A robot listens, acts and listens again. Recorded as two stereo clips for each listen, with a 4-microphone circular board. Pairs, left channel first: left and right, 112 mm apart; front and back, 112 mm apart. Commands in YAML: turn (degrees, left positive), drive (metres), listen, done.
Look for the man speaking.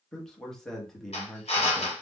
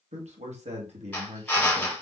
turn: 175
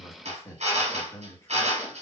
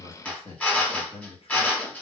turn: 25
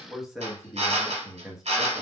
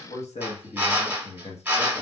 done: "Facing the man speaking, under 1 m away."